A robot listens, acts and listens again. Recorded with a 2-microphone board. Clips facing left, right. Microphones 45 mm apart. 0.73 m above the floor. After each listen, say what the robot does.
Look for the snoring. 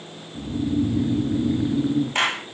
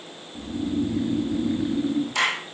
Turn 30° left.
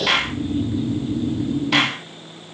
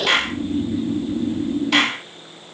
Turn 30° right.
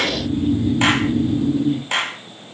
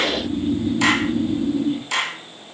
Found it: snoring, straight ahead, 2 to 4 m away.